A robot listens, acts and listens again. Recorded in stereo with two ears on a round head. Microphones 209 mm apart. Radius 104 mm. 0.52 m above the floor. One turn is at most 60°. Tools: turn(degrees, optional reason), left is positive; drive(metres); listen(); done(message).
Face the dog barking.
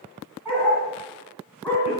turn(degrees=30)
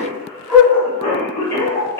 turn(degrees=30)
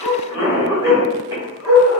turn(degrees=-30)
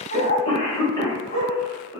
turn(degrees=30, reason="So it is at 30° left.")
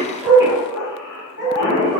done("Found it: a dog barking, straight ahead, 2 to 4 m away.")